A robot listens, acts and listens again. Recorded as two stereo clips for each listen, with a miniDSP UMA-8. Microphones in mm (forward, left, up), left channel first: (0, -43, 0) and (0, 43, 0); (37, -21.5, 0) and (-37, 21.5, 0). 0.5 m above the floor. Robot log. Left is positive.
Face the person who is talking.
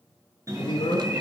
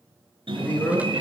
note: The man speaking: 100° right.
cmd yaw -100
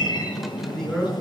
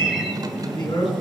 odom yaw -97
end: Found it: a man speaking, straight ahead, over 4 m away.